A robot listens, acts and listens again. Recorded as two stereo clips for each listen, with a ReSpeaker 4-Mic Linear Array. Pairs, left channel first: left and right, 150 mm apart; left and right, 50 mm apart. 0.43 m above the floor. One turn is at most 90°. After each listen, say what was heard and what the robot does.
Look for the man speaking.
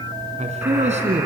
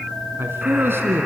The man speaking: about 50° right or 130° right. Turn 50° right.
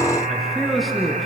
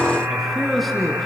Found it: a man speaking, straight ahead.